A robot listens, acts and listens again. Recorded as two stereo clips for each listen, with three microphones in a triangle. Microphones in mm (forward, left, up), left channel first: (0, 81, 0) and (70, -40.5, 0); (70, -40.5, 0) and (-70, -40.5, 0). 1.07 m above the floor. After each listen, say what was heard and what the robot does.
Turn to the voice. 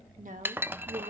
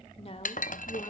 The woman speaking: 45° right. Turn 45° right.
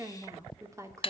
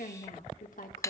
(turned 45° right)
The woman speaking is now 10° left. Turn 10° left.
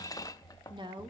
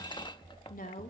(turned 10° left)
Found it: a woman speaking, straight ahead, 2 to 4 m away.